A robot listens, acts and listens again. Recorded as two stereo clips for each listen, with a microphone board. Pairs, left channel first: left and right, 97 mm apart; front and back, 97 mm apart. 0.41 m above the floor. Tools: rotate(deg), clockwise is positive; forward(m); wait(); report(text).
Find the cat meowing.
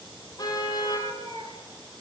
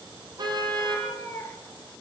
rotate(65)
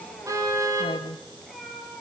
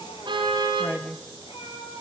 report("Found it: a cat meowing, straight ahead.")